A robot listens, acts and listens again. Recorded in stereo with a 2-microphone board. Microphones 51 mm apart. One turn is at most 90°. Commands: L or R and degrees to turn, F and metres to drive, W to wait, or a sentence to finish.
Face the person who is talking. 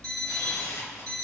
W
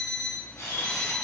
W
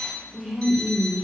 R15
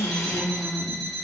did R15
Facing the woman speaking.